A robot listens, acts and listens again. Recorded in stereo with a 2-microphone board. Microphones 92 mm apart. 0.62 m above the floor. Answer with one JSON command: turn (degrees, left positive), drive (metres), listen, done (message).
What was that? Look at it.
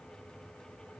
{"listen": true}
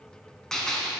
{"turn": 30}
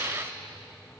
{"listen": true}
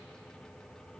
{"done": "I heard a gunshot, but can't make it out now. It was about 25° right or 145° left."}